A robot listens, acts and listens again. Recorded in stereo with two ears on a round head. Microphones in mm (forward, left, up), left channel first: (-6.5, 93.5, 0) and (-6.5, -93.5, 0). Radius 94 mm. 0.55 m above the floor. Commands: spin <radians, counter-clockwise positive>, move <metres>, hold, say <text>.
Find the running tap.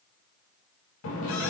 spin 1.13
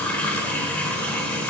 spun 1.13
spin 0.17
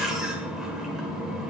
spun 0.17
say Facing the running tap, 1 to 2 m away.